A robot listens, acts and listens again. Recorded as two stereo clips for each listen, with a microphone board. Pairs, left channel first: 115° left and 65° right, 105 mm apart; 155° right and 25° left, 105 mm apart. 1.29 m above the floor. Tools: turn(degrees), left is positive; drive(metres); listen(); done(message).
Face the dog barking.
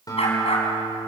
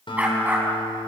turn(degrees=95)
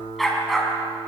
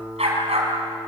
turn(degrees=20)
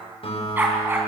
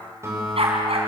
done("Found it: a dog barking, straight ahead.")